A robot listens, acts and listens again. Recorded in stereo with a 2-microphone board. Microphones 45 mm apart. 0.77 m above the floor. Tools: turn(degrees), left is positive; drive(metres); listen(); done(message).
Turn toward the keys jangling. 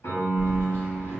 turn(degrees=60)
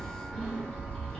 turn(degrees=20)
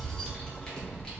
turn(degrees=25)
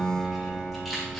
done("Facing the keys jangling, 1 to 2 m away.")